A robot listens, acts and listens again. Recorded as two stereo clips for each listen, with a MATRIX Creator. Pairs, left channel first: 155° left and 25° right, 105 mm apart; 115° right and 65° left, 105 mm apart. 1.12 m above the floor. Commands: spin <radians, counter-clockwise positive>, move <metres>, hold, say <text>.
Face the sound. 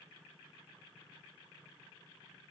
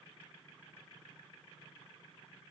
hold
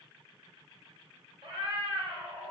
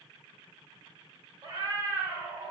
say Found it: a cat meowing, straight ahead, 2 to 4 m away.